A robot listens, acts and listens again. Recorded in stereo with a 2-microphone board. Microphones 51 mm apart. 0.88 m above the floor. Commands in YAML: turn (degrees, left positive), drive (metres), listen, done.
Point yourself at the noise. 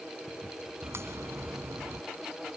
turn: -60
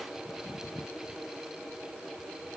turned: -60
listen: true
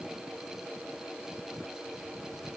done: "I heard a crack, but can't make it out now. It was about straight ahead or 60° right."